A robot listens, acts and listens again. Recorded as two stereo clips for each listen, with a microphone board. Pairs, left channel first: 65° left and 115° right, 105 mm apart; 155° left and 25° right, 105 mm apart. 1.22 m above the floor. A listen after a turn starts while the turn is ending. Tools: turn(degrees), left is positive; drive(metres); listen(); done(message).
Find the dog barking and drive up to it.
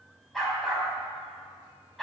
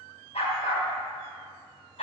turn(degrees=155)
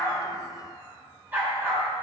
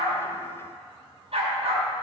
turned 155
turn(degrees=-40)
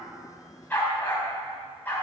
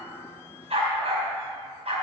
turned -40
drive(metres=1.0)
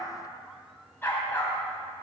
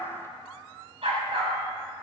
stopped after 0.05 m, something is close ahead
done("Something is in my way. I am facing the dog barking but have not reached it.")